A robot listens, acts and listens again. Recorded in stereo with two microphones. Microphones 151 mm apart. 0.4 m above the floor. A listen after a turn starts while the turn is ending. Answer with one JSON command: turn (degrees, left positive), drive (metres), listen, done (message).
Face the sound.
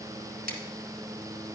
{"turn": -90}
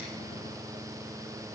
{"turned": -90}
{"listen": true}
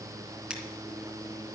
{"listen": true}
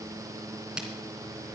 {"done": "Found it: scissors, straight ahead."}